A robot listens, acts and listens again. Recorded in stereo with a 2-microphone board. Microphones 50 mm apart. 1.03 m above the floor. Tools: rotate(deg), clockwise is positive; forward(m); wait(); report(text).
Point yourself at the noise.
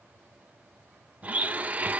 rotate(30)
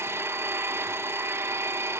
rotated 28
rotate(120)
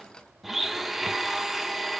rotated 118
report("Found it: a blender, straight ahead.")